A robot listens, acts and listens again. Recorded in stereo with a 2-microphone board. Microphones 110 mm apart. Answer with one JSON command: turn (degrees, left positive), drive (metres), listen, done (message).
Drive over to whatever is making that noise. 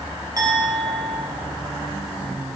{"turn": -30}
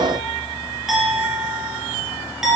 {"drive": 1.0}
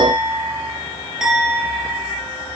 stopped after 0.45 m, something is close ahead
{"done": "Blocked. The clink is further on, straight ahead."}